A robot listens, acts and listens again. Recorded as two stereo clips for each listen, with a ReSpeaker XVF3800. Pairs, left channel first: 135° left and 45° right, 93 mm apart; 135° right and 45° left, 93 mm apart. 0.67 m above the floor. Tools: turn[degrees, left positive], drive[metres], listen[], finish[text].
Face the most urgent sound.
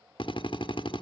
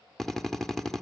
Action: listen[]
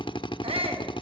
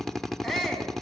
Thought: The shout: 45° right.
Action: turn[-45]
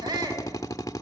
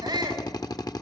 Action: finish[Found it: a shout, straight ahead, over 4 m away.]